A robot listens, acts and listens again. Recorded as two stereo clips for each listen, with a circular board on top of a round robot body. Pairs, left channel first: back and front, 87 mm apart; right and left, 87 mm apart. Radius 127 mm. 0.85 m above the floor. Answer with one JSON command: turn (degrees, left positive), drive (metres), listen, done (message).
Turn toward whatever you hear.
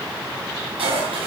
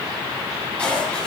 {"turn": -10}
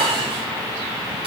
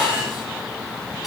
{"listen": true}
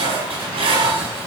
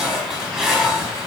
{"done": "Facing the dishes clattering, over 4 m away."}